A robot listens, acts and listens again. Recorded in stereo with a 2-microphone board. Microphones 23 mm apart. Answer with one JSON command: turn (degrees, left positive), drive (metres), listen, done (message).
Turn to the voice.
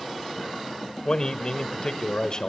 {"turn": 35}
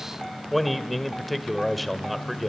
{"done": "Facing the man speaking, 1 to 2 m away."}